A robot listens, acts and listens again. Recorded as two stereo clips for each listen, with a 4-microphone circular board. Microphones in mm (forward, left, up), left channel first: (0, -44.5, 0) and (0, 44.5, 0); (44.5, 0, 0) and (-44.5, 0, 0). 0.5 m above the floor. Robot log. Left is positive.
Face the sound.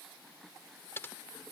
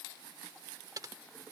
note: The typing on a keyboard: 145° right.
cmd yaw -145
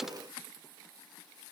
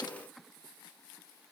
cmd idle
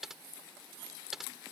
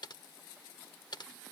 end: Found it: typing on a keyboard, straight ahead.